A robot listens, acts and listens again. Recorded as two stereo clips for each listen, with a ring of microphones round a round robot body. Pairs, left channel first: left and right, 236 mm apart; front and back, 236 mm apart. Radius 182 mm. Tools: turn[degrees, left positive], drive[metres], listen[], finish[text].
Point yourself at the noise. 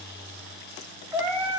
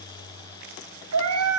Thought: The cat meowing: 175° right.
Action: turn[-175]
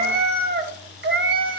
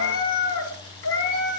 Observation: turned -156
Thought: The cat meowing is now 50° right.
Action: turn[-50]
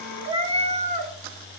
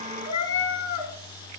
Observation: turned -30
Thought: The cat meowing is now 30° right.
Action: turn[-30]
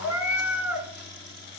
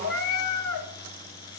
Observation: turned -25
Action: finish[Found it: a cat meowing, straight ahead.]